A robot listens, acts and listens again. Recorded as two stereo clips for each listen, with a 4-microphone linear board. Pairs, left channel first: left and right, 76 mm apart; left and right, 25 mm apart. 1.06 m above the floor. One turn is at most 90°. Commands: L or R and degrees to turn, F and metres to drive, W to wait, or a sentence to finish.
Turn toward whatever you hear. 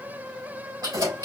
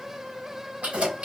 R60
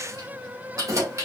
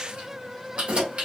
R45
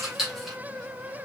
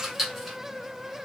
Found it: keys jangling, straight ahead.